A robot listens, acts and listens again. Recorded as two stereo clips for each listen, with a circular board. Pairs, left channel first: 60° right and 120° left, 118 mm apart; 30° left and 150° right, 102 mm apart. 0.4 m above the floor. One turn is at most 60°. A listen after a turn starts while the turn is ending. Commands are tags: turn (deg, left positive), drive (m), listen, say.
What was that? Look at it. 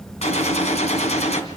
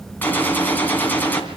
<turn deg="-40"/>
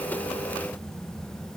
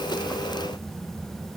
<say>Facing where the gunshot came from. I can't hear it now.</say>